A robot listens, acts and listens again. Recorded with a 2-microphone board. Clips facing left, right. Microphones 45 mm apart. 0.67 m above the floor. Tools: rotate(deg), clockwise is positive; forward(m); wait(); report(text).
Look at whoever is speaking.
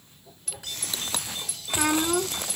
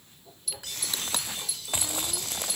rotate(-70)
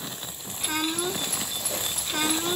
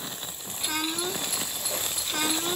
report("Found it: a child speaking, straight ahead.")